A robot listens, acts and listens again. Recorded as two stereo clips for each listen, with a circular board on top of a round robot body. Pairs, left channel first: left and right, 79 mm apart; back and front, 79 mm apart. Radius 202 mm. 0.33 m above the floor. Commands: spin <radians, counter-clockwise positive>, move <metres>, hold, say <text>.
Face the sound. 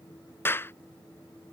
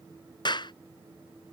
spin 2.71
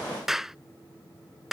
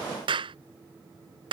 say Facing the clap.